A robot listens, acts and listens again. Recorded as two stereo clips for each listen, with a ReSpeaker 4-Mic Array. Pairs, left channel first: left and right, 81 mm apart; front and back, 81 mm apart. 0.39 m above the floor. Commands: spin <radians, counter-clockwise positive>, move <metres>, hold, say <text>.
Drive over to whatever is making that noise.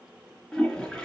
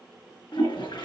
spin 0.17
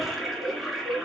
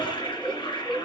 move 1.0
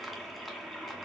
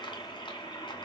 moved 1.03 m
move 1.0
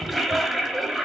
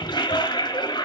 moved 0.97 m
move 1.0
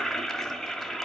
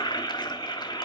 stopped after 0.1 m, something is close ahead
say Arrived at the toilet flushing, straight ahead.